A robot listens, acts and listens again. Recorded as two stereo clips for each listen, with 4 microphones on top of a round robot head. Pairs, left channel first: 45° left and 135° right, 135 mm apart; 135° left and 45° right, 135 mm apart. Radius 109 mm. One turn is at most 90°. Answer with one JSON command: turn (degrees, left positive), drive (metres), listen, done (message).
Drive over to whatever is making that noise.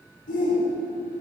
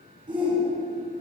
{"turn": 15}
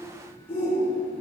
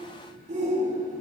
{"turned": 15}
{"drive": 1.0}
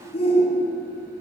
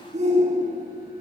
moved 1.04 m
{"drive": 1.0}
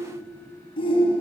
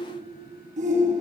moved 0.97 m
{"turn": -10}
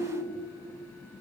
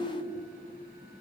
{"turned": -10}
{"drive": 1.0}
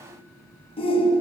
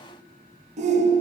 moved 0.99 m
{"turn": -10}
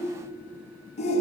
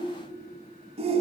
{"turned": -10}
{"drive": 1.0}
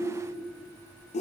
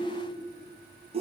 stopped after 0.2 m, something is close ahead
{"done": "Arrived at the shout, straight ahead."}